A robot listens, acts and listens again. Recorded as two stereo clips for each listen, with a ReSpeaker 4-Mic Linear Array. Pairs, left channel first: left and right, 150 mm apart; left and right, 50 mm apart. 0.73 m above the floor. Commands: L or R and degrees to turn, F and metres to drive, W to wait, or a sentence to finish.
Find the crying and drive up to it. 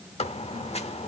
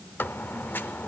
W
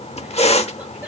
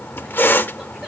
W
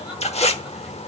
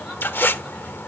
I can't make out crying to turn to.